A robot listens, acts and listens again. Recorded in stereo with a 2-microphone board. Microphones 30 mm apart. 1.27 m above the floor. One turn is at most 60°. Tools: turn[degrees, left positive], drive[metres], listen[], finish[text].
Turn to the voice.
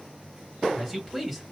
Action: turn[30]
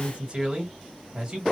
Thought: So it is at 30° right.
Action: turn[-30]
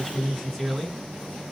Thought: The man speaking is now 15° left.
Action: turn[15]
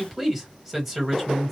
Action: finish[Found it: a man speaking, straight ahead.]